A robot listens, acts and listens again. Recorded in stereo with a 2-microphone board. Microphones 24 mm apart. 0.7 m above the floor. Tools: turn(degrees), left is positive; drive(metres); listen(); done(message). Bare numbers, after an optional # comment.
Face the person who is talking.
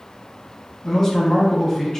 # The man speaking: about 20° left or 160° left.
turn(20)
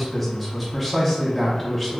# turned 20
done("Facing the man speaking.")